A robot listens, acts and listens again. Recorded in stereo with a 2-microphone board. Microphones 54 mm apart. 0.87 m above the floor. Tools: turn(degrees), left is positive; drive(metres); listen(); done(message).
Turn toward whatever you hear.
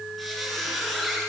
turn(degrees=30)
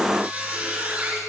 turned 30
turn(degrees=-30)
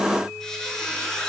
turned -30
turn(degrees=10)
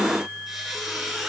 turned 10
done("Found it: a squeak, straight ahead.")